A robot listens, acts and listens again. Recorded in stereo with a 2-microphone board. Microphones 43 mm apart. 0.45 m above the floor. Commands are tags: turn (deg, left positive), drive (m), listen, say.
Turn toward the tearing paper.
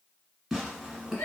<turn deg="-30"/>
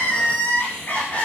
<listen/>
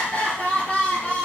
<listen/>
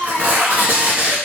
<turn deg="-140"/>
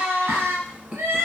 <turn deg="-20"/>
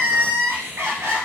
<listen/>
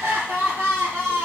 <listen/>
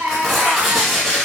<say>Facing the tearing paper, 1 to 2 m away.</say>